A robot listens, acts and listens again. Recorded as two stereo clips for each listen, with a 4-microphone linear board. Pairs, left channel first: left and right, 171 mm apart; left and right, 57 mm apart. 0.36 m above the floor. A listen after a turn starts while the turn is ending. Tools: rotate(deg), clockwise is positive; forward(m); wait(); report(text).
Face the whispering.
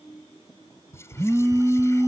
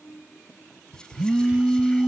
rotate(-15)
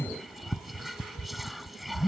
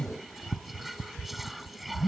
report("Found it: whispering, straight ahead.")